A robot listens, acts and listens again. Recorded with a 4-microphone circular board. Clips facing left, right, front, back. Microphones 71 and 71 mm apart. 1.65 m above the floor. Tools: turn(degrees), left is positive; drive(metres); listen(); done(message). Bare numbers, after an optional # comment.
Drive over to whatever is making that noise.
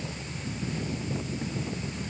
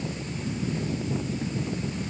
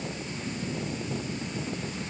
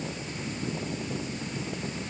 listen()
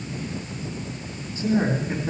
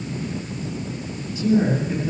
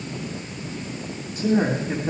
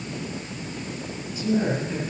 # The man speaking: 35° left.
turn(35)
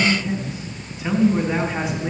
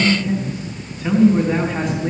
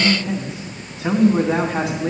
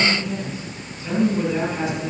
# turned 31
drive(1.0)
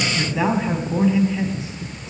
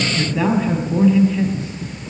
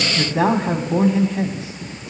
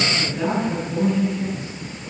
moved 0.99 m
# The man speaking is now 10° left.
turn(10)
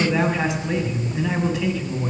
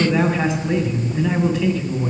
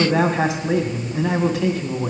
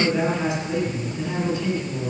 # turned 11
drive(1.0)
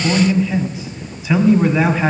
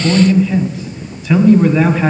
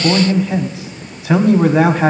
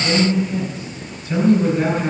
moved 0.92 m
drive(1.0)
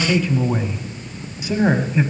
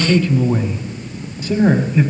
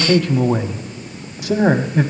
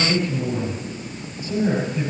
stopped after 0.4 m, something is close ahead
# The man speaking is now 10° left.
turn(10)
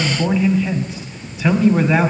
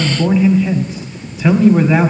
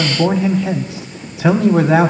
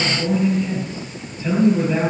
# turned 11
done("Arrived at the man speaking, straight ahead.")